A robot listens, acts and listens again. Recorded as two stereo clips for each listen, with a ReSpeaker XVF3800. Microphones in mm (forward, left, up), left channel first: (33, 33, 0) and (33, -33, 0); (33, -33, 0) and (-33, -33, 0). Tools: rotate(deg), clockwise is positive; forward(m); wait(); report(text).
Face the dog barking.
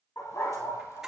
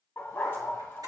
rotate(-60)
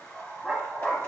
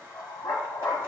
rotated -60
rotate(-20)
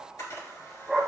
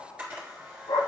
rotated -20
report("Found it: a dog barking, straight ahead.")